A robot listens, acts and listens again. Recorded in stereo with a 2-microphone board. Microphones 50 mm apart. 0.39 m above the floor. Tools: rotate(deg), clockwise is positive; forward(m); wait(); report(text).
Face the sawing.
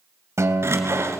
rotate(60)
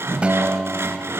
rotate(60)
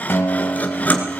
rotate(-30)
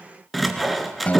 report("Found it: sawing, straight ahead.")